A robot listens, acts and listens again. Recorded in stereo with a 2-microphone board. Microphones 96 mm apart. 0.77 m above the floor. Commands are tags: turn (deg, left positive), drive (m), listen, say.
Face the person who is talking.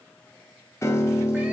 <listen/>
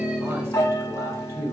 <turn deg="-30"/>
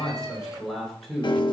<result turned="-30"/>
<say>Found it: a man speaking, straight ahead, 2 to 4 m away.</say>